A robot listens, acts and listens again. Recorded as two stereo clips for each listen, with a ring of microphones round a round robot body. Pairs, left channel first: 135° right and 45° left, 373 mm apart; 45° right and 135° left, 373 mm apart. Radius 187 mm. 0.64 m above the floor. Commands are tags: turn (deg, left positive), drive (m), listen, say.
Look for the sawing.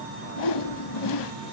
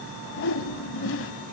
<listen/>
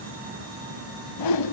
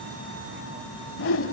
<listen/>
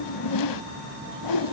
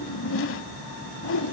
<say>I can't make out sawing, only a whoosh.</say>